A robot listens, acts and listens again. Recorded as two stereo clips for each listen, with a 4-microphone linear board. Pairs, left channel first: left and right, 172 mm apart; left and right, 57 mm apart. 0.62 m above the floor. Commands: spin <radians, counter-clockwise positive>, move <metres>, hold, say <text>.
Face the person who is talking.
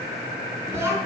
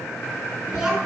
spin -0.52
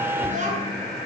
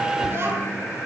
spin -2.36
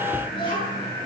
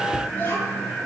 spin 0.52
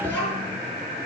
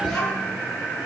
spin 0.17
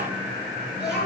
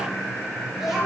say Facing the child speaking.